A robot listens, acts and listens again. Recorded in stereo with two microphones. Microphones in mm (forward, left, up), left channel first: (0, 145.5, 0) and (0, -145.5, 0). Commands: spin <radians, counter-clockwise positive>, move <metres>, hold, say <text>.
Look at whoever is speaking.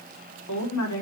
spin 1.31
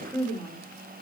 say Found it: a woman speaking, straight ahead.